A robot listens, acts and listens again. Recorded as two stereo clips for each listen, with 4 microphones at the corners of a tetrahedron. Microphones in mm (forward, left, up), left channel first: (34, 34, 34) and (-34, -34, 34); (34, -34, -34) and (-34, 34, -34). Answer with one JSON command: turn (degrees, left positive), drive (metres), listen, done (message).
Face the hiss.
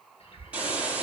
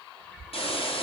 {"turn": -55}
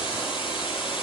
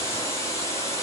{"turn": 15}
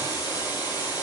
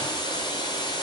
{"done": "Facing the hiss, over 4 m away."}